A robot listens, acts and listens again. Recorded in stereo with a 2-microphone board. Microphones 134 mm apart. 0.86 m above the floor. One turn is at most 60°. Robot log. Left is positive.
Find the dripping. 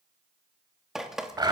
cmd yaw -30
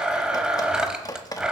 note: So it is at 25° left.
cmd yaw +25
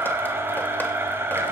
cmd idle
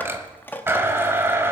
note: The dripping is now 15° left.
cmd yaw +15
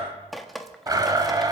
end: Found it: dripping, straight ahead.